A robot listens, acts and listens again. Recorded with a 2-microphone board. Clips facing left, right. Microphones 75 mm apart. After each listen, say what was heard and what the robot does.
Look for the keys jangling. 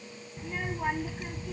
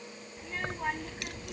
Turn 90° right.
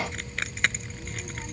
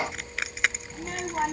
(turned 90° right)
Found it: keys jangling, straight ahead.